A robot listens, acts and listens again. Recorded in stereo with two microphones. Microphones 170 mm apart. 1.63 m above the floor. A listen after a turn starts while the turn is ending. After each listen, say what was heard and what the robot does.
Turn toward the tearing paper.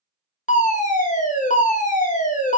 Keep listening.
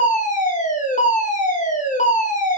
Keep listening.
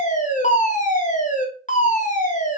I can't make out tearing paper to turn to.